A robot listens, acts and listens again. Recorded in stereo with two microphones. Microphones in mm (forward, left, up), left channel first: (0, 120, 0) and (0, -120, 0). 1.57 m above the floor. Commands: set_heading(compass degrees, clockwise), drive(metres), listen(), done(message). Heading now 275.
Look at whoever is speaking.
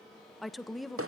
set_heading(245)
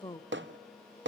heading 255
set_heading(95)
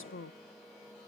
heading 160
set_heading(95)
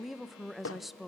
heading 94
done("Found it: a woman speaking, straight ahead.")